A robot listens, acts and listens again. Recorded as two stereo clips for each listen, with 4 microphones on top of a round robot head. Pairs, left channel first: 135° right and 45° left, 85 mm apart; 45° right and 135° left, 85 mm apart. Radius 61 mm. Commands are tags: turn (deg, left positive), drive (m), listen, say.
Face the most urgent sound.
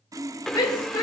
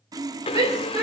<turn deg="180"/>
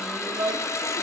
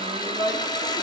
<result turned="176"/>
<say>Facing the shout.</say>